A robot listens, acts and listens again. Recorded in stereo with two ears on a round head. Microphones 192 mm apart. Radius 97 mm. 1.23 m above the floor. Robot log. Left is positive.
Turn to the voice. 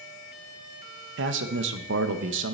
note: The man speaking: about 55° right or 125° right.
cmd yaw -55
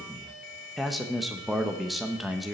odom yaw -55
end: Found it: a man speaking, straight ahead, under 1 m away.